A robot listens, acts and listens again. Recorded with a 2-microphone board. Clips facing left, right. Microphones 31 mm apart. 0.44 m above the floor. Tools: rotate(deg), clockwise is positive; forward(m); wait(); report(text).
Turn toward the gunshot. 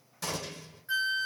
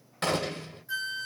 rotate(50)
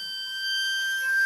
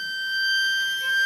wait()
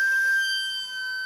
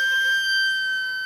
report("I heard a gunshot, but can't make it out now. It was about straight ahead or 80° right.")